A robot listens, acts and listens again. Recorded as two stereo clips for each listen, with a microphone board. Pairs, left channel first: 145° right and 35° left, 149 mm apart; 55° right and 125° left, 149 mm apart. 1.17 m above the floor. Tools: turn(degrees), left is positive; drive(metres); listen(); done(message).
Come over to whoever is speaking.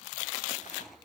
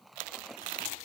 listen()
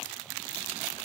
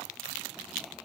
listen()
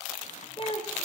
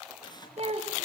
turn(degrees=165)
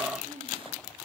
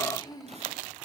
drive(metres=1.0)
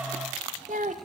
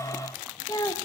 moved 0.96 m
turn(degrees=10)
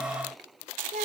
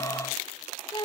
drive(metres=1.0)
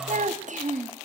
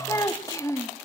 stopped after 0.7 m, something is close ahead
turn(degrees=10)
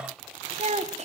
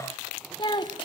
done("I am next to the child speaking.")